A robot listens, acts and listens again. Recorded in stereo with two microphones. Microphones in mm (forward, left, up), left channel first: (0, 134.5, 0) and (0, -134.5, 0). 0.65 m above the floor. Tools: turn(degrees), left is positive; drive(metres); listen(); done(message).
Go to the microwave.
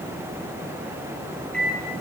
turn(degrees=30)
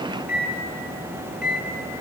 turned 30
turn(degrees=145)
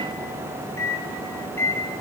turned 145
turn(degrees=10)
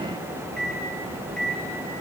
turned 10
drive(metres=1.0)
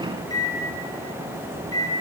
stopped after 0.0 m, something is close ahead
turn(degrees=15)
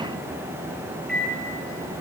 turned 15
done("Blocked. The microwave is further on, straight ahead.")